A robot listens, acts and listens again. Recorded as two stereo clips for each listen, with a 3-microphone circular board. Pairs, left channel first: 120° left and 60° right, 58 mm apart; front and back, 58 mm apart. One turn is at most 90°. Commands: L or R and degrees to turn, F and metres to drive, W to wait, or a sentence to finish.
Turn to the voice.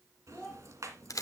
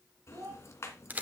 R90
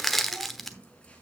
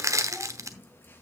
R85
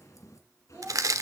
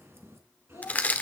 Facing the child speaking, over 4 m away.